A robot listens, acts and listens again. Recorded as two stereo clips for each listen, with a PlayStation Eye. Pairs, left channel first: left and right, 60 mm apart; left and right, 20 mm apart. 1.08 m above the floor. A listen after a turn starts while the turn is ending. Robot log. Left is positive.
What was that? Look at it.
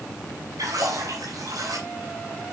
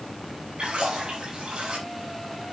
note: The splash: about 70° right or 110° right.
cmd yaw -70
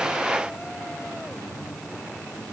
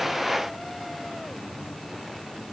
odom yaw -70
cmd idle
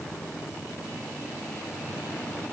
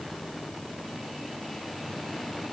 end: I heard a splash, but can't make it out now. It was about straight ahead or 40° right.